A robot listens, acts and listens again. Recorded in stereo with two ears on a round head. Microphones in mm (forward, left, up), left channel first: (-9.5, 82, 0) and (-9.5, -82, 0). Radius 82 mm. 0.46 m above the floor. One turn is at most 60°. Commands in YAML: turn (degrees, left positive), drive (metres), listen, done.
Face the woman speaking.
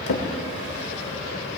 listen: true
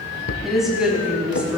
turn: -30
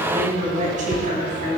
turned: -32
turn: -60
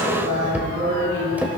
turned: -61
turn: -60
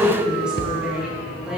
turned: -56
done: "Facing the woman speaking."